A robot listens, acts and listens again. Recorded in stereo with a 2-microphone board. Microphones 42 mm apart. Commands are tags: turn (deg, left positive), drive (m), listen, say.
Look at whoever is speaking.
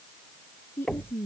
<turn deg="70"/>
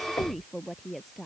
<say>Facing the woman speaking.</say>